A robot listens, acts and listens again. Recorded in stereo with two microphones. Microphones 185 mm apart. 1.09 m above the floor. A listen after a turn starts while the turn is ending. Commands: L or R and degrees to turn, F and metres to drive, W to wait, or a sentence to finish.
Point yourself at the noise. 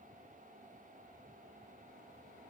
W
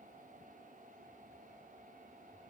W
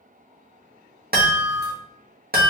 R55
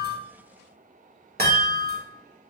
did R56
R65
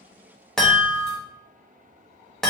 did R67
Facing the chime, 1 to 2 m away.